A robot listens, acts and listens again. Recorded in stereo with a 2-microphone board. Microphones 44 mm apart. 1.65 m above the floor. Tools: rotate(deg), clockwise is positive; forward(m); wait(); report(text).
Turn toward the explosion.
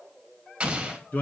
rotate(25)
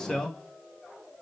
wait()
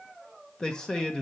report("I heard an explosion, but can't make it out now. It was about straight ahead or 130° right.")